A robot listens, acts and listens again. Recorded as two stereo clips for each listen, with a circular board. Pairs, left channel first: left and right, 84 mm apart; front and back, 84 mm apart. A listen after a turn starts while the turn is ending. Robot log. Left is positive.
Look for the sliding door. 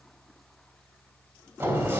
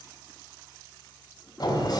note: The sliding door: 25° right.
cmd yaw -25
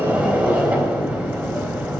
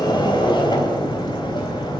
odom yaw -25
note: The sliding door is now 10° right.
cmd yaw -10
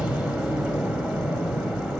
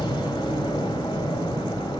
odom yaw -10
end: Found it: a sliding door, straight ahead.